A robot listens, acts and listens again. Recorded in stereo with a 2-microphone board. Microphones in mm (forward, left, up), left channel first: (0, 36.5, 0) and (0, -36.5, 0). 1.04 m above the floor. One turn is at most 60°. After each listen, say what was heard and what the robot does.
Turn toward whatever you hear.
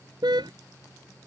Turn 60° right.
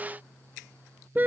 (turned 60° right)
So it is at 25° right. Turn 25° right.
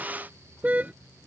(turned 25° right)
The car horn is now 20° right. Turn 20° right.
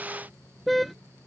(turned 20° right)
Facing the car horn.